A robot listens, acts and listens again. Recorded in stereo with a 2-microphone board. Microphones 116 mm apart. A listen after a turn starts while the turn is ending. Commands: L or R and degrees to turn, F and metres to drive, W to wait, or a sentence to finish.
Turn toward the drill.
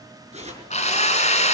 L90
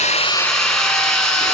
Found it: a drill, straight ahead.